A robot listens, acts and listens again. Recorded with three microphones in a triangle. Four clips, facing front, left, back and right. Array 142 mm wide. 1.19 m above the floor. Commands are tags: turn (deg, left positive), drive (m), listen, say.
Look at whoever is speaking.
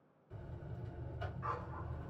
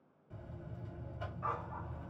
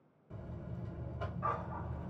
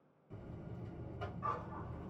<listen/>
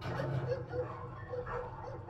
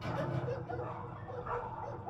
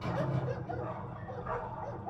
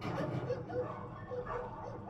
<listen/>
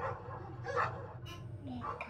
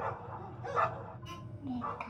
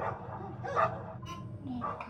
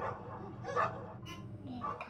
<turn deg="120"/>
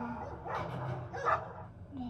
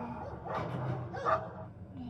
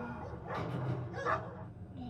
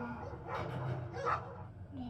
<listen/>
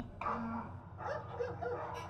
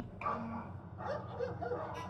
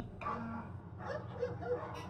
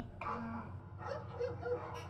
<listen/>
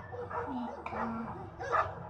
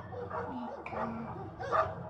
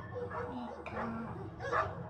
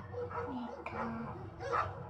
<turn deg="10"/>
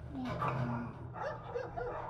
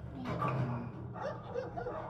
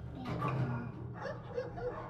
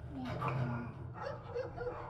<listen/>
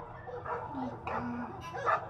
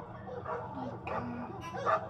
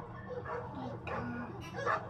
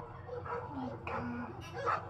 <listen/>
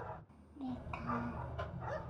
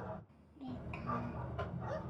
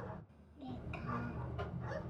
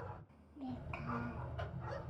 <say>Facing the child speaking.</say>